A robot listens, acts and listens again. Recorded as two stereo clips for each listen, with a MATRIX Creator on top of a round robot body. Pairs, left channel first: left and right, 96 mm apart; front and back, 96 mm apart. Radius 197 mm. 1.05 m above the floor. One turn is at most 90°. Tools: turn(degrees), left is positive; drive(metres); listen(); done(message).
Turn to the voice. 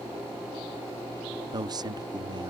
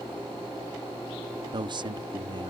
turn(degrees=-90)
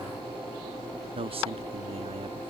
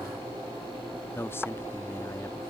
turn(degrees=-70)
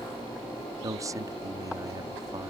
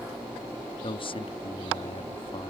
turn(degrees=-35)
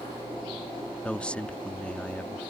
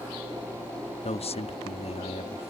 turn(degrees=10)
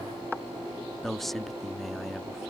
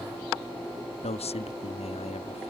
done("Facing the man speaking.")